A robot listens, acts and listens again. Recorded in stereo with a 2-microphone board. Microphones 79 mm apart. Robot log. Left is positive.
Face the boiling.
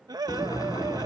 note: The boiling: about 55° left or 125° left.
cmd yaw +55
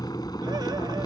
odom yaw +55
note: So it is at 65° left.
cmd yaw +65
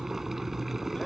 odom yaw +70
end: Found it: boiling, straight ahead.